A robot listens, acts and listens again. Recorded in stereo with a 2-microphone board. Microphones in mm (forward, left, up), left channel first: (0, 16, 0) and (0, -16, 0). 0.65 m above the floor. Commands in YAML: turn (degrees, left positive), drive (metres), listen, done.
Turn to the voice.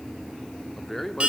turn: 30
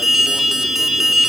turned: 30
listen: true
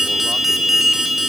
listen: true
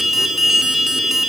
done: "I heard a man speaking, but can't make it out now. It was about 20° right or 140° left."